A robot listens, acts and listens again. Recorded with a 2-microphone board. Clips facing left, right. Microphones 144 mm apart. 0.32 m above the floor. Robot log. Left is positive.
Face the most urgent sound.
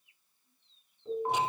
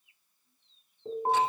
note: The alarm: about 40° right or 140° right.
cmd yaw -40
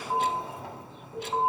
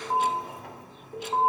end: Facing the alarm.